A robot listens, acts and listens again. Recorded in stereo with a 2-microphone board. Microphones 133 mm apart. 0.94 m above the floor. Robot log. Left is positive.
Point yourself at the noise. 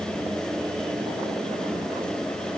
cmd idle
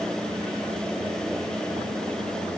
cmd idle
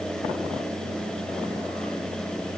end: I can't make out anything to turn to.